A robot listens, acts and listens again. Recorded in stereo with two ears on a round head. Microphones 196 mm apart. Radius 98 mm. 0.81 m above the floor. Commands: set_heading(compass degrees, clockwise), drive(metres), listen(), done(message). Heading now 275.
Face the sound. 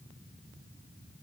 listen()
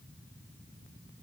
listen()
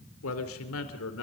set_heading(200)
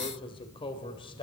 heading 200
set_heading(175)
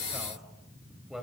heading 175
done("Facing the man speaking.")